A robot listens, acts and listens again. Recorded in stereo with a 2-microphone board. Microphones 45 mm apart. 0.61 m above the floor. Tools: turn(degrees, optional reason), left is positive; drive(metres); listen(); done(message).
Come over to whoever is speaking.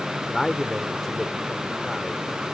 turn(degrees=30)
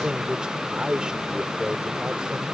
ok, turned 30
turn(degrees=-20, reason="So it is at 20° right.")
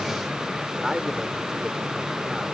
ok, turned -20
turn(degrees=-10, reason="The man speaking is now 10° right.")
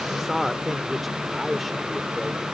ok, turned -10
drive(metres=1.0)
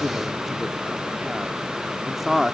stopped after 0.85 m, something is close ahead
done("Arrived at the man speaking, straight ahead.")